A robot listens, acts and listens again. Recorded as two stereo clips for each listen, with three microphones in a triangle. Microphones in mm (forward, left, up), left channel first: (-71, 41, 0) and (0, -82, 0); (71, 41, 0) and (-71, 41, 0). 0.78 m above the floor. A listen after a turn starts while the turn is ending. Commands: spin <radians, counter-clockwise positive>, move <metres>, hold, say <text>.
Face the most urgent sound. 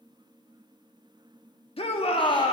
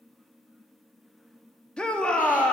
spin 1.40
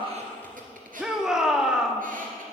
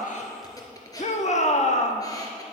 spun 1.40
spin 0.44
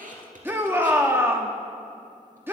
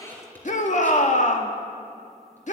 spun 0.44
spin 0.17
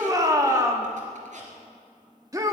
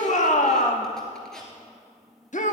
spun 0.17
say Facing the shout, 1 to 2 m away.